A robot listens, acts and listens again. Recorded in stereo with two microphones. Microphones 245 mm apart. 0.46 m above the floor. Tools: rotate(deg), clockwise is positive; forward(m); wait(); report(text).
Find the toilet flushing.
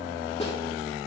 wait()
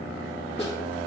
wait()
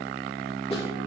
report("I can't make out a toilet flushing to turn to.")